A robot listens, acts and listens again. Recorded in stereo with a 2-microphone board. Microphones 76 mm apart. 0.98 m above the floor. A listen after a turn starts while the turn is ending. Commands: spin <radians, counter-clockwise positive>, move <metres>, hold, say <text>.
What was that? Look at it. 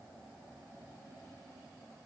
hold
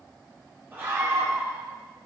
spin -0.44
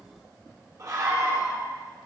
spin -2.27
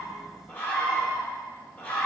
spin 0.35
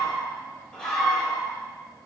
spin 0.17
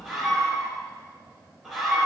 say Found it: a scream, straight ahead, 2 to 4 m away.